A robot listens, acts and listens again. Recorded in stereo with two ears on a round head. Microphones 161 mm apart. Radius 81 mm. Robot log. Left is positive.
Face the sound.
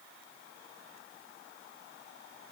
cmd idle
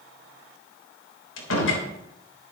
cmd yaw +90
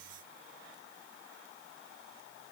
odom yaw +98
note: Nothing new. It was at 10° right.
cmd yaw -10
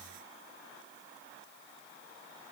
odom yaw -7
end: Facing where the door slam came from. I can't hear it now.